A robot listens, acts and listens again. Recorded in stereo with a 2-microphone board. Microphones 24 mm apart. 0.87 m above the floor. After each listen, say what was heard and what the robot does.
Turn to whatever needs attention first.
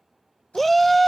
Turn 30° left.
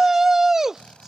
So it is at 20° right. Turn 20° right.
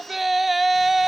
Facing the shout.